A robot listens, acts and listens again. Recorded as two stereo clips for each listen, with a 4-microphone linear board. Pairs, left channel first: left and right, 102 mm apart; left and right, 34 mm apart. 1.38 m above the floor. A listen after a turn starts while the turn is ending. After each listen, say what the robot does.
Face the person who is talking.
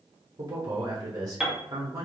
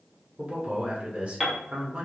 Turn 40° right.
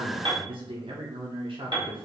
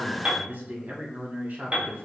Turn 95° right.
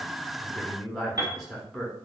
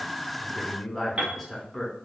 Found it: a man speaking, straight ahead.